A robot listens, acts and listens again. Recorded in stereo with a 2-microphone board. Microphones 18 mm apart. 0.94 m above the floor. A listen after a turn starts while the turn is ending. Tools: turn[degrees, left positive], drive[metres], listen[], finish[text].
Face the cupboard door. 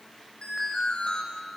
Action: listen[]
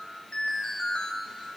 Action: listen[]
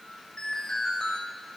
Action: finish[I can't make out a cupboard door, only an alarm.]